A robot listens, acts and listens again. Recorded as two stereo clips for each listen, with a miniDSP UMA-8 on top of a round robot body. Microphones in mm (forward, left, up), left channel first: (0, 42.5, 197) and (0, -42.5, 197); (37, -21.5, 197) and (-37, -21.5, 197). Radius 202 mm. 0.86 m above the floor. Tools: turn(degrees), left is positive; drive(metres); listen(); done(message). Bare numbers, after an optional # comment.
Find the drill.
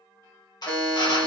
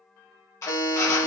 # The drill: 50° left.
turn(50)
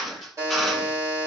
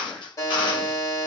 done("Facing the drill, 1 to 2 m away.")